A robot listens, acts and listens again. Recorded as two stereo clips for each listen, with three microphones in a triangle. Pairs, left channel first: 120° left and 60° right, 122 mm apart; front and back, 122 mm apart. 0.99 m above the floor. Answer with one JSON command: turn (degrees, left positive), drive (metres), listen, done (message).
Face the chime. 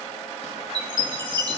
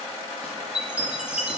{"turn": -100}
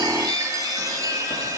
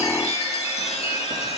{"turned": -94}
{"done": "Facing the chime, 1 to 2 m away."}